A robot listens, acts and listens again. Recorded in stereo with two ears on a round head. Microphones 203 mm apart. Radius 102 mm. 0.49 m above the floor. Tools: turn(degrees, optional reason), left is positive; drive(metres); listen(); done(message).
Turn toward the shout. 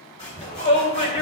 turn(degrees=25, reason="The shout: about 25° left or 155° left.")
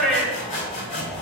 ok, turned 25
done("Facing the shout, 2 to 4 m away.")